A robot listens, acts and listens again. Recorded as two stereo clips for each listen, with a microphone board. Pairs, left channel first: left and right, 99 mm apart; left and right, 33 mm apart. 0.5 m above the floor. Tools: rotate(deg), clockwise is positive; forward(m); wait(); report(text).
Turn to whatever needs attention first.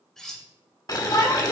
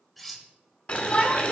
rotate(-40)
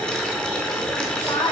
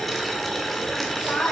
rotate(-95)
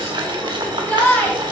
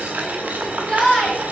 rotate(-20)
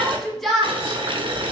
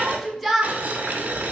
report("Facing the shout, 1 to 2 m away.")